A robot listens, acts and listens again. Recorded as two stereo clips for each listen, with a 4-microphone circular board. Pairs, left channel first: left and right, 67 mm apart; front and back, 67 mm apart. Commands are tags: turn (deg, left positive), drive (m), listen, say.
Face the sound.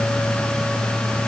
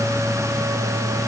<listen/>
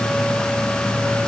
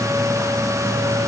<listen/>
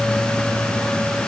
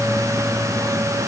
<say>I can't make out anything.</say>